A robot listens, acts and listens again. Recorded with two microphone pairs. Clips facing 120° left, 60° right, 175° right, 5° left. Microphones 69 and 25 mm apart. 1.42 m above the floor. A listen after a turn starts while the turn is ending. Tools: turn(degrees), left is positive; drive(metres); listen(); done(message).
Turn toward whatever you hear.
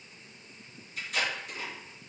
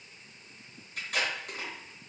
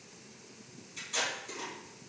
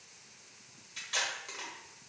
turn(degrees=-30)
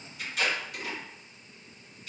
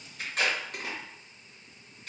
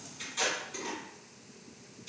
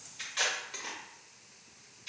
turn(degrees=-20)
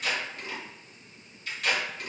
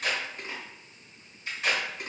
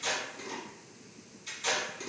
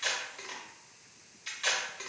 done("Facing the tape being pulled, under 1 m away.")